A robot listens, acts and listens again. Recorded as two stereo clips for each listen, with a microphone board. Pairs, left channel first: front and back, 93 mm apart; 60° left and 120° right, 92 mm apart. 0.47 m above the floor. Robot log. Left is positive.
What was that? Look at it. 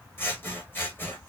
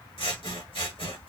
note: The scissors: 65° left.
cmd yaw +65
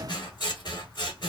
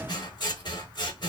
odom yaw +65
note: The scissors is now 30° left.
cmd yaw +30
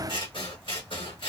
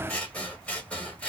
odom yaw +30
note: The scissors is now 15° right.
cmd yaw -15
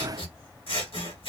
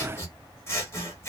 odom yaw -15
end: Facing the scissors, 1 to 2 m away.